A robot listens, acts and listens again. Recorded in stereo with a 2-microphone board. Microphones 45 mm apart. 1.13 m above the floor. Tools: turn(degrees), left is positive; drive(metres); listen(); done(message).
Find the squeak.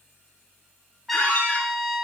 turn(degrees=30)
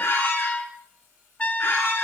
turn(degrees=120)
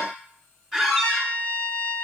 turn(degrees=10)
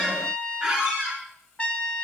done("Found it: a squeak, straight ahead.")